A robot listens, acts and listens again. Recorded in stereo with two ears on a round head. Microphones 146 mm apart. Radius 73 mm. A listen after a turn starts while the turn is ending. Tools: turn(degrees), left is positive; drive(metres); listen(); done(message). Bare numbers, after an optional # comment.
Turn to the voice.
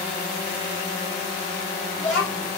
turn(30)
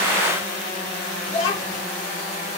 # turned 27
# So it is at 140° left.
turn(140)
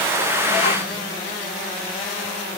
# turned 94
# Nothing new. It was at 45° left.
turn(45)
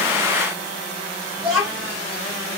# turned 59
# The child speaking is now 15° right.
turn(-15)
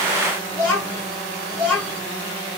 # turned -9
done("Facing the child speaking.")